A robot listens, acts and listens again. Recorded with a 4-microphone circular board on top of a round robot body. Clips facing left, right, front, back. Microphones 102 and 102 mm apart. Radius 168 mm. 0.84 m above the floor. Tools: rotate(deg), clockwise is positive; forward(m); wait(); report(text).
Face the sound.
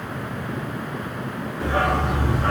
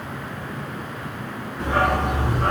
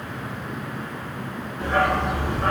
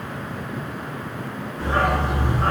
rotate(125)
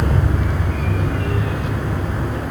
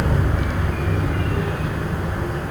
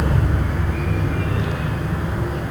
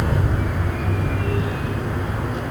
rotate(-10)
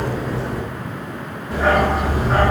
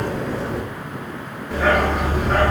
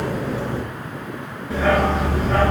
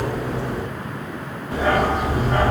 report("Facing the dog barking, over 4 m away.")